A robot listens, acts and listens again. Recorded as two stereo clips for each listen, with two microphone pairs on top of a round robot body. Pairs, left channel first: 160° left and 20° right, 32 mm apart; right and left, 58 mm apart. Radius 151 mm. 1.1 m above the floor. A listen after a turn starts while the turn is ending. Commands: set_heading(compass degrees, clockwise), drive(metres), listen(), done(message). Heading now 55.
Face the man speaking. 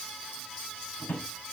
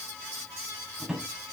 listen()
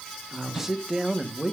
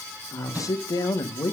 set_heading(150)
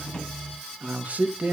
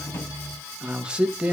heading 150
set_heading(130)
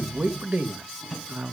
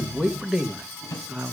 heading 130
set_heading(110)
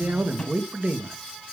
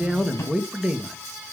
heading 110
set_heading(100)
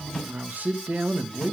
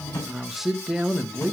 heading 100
done("Found it: a man speaking, straight ahead.")